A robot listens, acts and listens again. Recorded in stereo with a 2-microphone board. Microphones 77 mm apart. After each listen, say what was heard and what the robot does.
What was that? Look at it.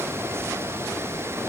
Keep listening.
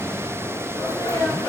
The sneeze: about 55° left or 125° left. Turn 55° left.
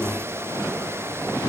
Keep listening.
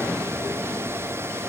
I heard a sneeze, but can't make it out now. It was about straight ahead or 70° left.